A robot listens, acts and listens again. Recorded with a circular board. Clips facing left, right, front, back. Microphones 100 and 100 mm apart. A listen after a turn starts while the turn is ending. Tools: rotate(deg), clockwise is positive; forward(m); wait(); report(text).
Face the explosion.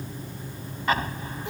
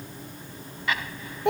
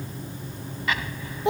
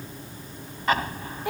rotate(-135)
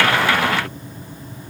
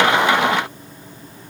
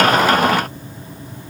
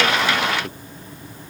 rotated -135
report("I heard an explosion from this way, but can't make it out now.")